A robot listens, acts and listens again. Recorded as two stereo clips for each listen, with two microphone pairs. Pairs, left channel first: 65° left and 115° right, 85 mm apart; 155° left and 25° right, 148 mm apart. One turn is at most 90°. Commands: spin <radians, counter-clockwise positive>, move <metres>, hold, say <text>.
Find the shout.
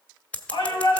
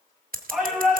spin 1.05
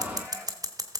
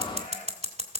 hold
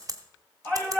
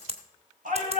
say Found it: a shout, straight ahead.